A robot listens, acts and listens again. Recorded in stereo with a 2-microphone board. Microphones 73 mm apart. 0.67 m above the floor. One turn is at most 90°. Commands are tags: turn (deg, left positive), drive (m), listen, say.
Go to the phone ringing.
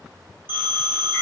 <turn deg="-25"/>
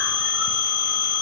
<turn deg="-90"/>
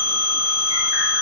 <turn deg="-35"/>
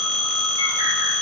<drive m="1.0"/>
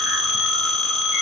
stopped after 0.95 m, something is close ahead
<say>I am next to the phone ringing.</say>